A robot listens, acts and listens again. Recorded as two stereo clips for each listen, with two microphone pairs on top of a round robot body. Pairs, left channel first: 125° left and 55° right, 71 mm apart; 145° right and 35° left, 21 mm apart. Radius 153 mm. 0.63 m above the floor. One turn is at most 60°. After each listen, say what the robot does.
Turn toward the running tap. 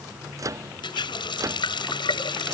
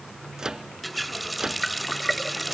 Turn 60° left.
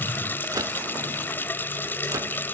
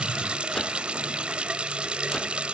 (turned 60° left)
Turn 60° left.
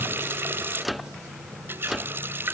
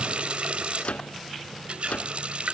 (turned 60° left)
Found it: a running tap, straight ahead.